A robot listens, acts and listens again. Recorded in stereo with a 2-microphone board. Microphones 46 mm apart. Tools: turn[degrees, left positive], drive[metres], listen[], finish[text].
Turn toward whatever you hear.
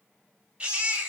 Thought: The baby crying: about 25° right or 155° right.
Action: turn[-25]
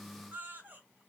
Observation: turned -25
Thought: So it is at 125° right.
Action: turn[-125]
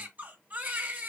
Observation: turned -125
Thought: The baby crying is now 55° right.
Action: turn[-55]
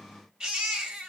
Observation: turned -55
Thought: The baby crying is now 20° right.
Action: turn[-20]
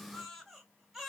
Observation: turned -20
Action: finish[Found it: a baby crying, straight ahead, 1 to 2 m away.]